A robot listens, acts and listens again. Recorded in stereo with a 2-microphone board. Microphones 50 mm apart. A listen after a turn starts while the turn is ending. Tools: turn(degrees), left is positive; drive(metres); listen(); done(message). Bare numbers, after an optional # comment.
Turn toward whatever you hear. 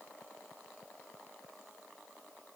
listen()
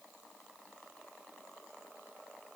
listen()
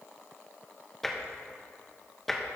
turn(30)
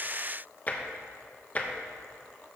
# So it is at 140° left.
turn(140)
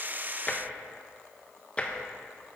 # The tapping is now 25° left.
turn(25)
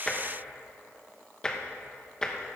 # The tapping is now 15° left.
turn(15)
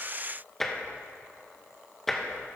done("Facing the tapping, 1 to 2 m away.")